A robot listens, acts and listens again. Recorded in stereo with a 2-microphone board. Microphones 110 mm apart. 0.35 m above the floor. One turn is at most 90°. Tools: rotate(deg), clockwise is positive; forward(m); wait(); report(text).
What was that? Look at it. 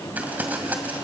rotate(15)
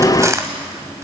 rotate(90)
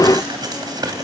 rotate(50)
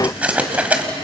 rotate(15)
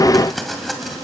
report("Facing the crumpling, 2 to 4 m away.")